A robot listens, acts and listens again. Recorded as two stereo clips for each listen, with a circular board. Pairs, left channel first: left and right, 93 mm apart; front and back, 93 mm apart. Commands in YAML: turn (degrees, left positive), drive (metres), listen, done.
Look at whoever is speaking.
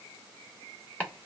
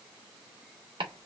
listen: true
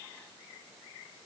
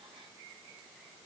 listen: true
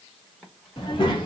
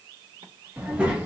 turn: 105
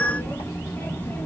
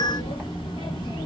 turn: 20
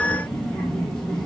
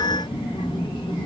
done: "Found it: a child speaking, straight ahead, 1 to 2 m away."